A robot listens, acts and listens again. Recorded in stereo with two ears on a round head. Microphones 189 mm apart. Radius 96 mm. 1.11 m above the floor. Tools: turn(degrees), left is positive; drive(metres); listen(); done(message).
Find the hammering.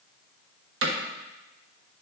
turn(degrees=-65)
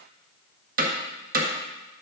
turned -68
turn(degrees=-40)
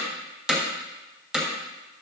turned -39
done("Found it: hammering, straight ahead, 1 to 2 m away.")